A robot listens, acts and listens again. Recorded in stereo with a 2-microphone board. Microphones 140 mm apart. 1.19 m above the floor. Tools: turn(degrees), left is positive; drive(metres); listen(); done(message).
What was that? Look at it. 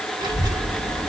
turn(degrees=-25)
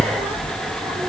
turn(degrees=-35)
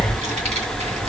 turn(degrees=-130)
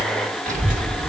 turn(degrees=-70)
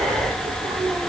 turn(degrees=-25)
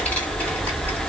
turn(degrees=10)
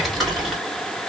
done("Found it: a child speaking, straight ahead.")